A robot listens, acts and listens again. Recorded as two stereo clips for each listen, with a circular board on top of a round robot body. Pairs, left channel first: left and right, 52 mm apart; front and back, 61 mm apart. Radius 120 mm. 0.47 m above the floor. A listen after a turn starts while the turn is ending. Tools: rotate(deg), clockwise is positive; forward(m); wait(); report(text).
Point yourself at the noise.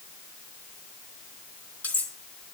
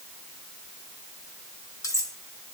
rotate(-30)
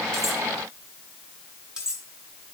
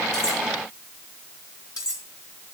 rotate(15)
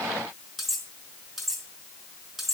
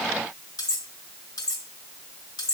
report("Found it: cutlery clinking, straight ahead.")